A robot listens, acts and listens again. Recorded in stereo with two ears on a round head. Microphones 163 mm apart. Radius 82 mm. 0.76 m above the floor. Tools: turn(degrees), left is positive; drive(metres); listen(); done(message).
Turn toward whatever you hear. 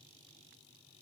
listen()
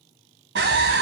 turn(degrees=-70)
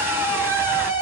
turn(degrees=-15)
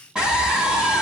done("Found it: a scream, straight ahead, 1 to 2 m away.")